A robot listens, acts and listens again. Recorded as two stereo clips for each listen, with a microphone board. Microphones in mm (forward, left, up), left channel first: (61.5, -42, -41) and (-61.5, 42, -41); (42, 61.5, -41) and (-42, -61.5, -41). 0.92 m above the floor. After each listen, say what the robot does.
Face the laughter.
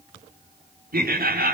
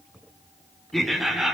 Turn 150° left.
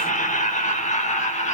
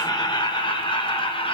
Found it: laughter, straight ahead.